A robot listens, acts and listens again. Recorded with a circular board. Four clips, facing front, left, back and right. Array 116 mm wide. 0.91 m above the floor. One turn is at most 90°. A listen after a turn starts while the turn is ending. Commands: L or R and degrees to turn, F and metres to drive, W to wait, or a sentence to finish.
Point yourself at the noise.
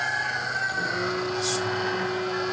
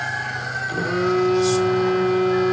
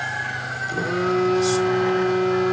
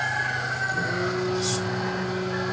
L90
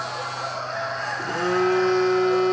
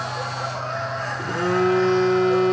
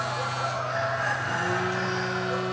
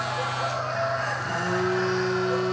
L45
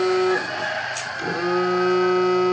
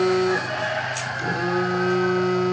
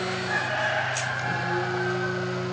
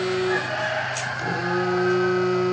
Facing the phone buzzing, 2 to 4 m away.